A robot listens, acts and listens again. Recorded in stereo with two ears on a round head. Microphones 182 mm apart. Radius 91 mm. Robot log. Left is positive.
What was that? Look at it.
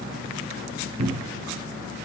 note: The cupboard door: about 30° right or 150° right.
cmd yaw -30
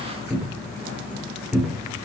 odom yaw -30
end: Found it: a cupboard door, straight ahead.